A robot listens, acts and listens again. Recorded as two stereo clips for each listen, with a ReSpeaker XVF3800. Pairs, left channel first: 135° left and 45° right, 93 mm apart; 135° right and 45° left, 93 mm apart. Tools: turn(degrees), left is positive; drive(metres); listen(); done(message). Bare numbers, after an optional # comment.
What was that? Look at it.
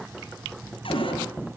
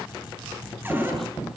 # The cupboard door: 115° left.
turn(115)
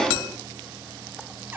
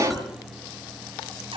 # The cupboard door is now 20° left.
turn(20)
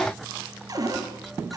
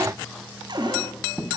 done("Found it: a cupboard door, straight ahead, over 4 m away.")